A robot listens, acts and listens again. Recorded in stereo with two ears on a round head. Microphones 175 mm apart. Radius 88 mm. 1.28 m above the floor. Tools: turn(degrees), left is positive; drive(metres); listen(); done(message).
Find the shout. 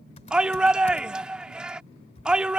turn(degrees=-30)
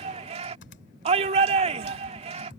turn(degrees=-145)
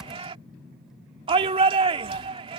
turn(degrees=-30)
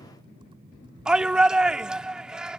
done("Facing the shout.")